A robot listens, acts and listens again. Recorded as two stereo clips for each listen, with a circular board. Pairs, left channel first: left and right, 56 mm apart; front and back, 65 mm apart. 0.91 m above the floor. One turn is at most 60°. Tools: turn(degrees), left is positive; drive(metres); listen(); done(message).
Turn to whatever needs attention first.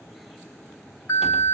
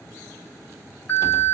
turn(degrees=60)
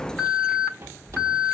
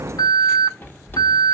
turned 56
turn(degrees=15)
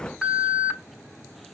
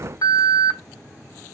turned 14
done("Facing the alarm, over 4 m away.")